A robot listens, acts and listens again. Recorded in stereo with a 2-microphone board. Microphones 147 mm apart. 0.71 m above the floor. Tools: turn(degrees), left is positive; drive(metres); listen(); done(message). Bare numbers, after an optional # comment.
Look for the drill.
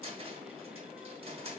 listen()
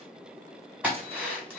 turn(-30)
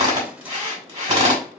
# So it is at 140° right.
turn(-140)
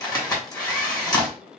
# The drill is now 25° left.
turn(25)
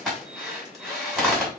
done("Facing the drill.")